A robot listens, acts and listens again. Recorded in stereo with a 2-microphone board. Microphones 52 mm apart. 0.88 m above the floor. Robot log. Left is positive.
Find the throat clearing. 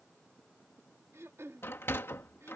note: The throat clearing: about 60° right or 120° right.
cmd yaw -60
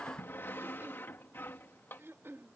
note: So it is at 55° right.
cmd yaw -55
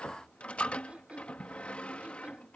note: The throat clearing is now 25° right.
cmd yaw -25
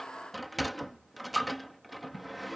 cmd idle
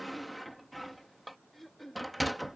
end: Found it: throat clearing, straight ahead.